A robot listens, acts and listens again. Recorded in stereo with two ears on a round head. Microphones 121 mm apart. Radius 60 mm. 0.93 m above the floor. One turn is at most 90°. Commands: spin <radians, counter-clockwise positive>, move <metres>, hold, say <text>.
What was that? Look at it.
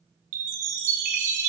spin -1.05
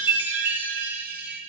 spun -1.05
spin -0.26
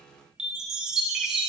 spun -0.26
say Facing the chime.